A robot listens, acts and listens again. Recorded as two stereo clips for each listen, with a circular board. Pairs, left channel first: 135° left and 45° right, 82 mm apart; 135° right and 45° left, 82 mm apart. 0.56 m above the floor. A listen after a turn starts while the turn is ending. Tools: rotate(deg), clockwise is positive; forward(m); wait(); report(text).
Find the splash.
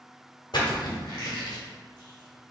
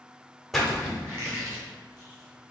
rotate(-135)
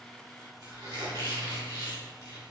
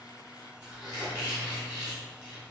report("Facing where the splash came from. I can't hear it now.")